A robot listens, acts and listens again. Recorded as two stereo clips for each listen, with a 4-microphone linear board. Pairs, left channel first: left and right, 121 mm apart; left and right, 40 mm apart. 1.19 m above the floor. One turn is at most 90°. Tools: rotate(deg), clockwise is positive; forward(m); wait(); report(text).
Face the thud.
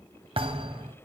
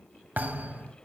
rotate(50)
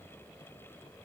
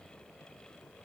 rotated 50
wait()
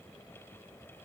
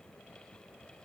report("I heard a thud, but can't make it out now. It was about straight ahead or 80° right.")